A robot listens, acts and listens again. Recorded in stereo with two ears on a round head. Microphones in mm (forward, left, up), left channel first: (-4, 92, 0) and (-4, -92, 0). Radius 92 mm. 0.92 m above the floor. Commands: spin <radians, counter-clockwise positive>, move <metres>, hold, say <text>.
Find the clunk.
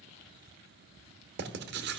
hold
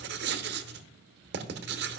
hold
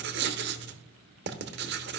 say I can't make out a clunk to turn to.